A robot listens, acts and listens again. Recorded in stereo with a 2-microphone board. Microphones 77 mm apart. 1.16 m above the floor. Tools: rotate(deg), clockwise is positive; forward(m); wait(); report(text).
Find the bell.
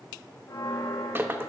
rotate(-70)
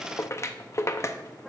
report("Found it: a bell, straight ahead.")